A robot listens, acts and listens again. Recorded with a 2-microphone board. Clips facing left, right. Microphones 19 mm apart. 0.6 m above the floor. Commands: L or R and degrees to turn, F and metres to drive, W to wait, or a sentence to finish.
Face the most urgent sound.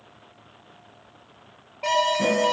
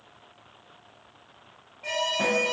L70
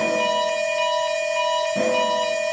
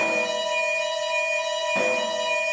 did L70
L25
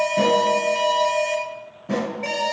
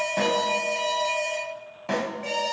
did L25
L25
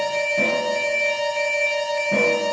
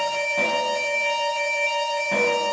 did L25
Facing the alarm, 1 to 2 m away.